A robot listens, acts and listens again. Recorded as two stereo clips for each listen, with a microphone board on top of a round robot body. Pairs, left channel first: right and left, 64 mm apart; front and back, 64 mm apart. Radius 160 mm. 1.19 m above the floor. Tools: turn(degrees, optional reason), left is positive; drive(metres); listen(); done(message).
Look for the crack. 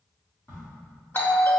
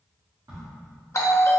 turn(degrees=-145, reason="The crack: 145° right.")
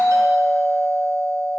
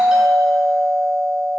done("Facing where the crack came from. I can't hear it now.")